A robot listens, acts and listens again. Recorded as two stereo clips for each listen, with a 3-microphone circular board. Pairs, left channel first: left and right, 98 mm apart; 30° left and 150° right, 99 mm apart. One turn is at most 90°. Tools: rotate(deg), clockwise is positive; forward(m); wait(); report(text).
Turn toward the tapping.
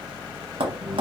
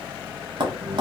rotate(90)
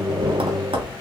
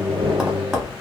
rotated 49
rotate(65)
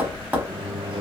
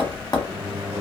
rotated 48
rotate(20)
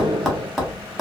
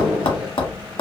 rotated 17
report("Found it: tapping, straight ahead, under 1 m away.")